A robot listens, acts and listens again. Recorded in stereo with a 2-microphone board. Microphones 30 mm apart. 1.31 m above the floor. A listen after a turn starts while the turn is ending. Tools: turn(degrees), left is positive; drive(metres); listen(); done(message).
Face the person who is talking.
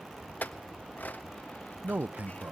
turn(degrees=-60)
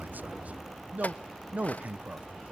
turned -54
turn(degrees=-55)
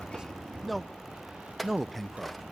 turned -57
done("Facing the man speaking, under 1 m away.")